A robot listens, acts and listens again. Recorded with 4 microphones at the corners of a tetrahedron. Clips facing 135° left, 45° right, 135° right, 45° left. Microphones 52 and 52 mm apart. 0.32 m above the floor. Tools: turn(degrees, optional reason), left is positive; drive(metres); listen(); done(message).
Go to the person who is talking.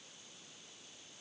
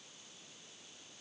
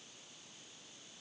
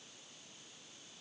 listen()
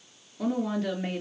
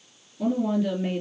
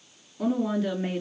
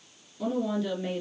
turn(degrees=170, reason="The woman speaking: 170° left.")
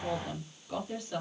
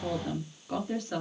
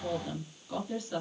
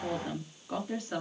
drive(metres=1.0)
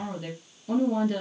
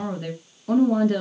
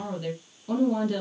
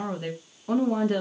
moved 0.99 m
drive(metres=1.0)
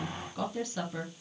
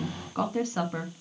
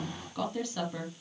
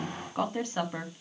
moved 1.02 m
drive(metres=1.0)
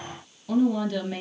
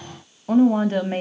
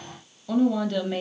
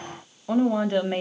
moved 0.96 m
drive(metres=1.0)
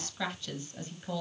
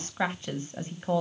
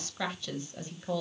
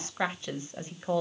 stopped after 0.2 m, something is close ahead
done("I am next to the woman speaking.")